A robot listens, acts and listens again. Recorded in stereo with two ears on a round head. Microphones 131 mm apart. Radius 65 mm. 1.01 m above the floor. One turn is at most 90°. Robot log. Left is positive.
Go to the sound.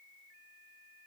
cmd idle
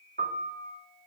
note: The piano: about 65° right or 115° right.
cmd yaw -65
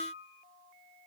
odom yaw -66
note: So it is at 50° right.
cmd yaw -50
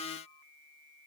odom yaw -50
cmd idle
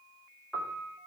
cmd fwd 1.0
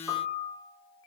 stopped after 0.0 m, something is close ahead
end: Something is in my way. I am facing the piano but have not reached it.